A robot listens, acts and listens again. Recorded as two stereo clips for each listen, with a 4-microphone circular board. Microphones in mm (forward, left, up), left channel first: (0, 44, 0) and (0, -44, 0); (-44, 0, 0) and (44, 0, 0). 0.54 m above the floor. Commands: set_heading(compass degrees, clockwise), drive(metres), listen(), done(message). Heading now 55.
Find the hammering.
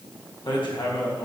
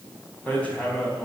set_heading(310)
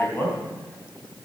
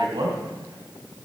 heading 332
set_heading(307)
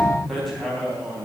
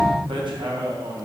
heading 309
done("Found it: hammering, straight ahead, 2 to 4 m away.")